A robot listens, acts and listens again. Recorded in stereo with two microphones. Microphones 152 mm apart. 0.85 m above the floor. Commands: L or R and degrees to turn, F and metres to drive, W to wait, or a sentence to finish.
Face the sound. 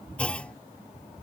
L30
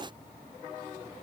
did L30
W
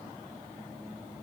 I heard a clunk, but can't make it out now. It was about 20° right or 140° left.